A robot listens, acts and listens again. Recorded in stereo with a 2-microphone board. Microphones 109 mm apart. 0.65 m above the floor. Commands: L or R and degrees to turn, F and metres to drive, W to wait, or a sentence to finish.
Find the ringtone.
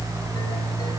W
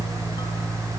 W
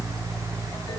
I can't make out a ringtone to turn to.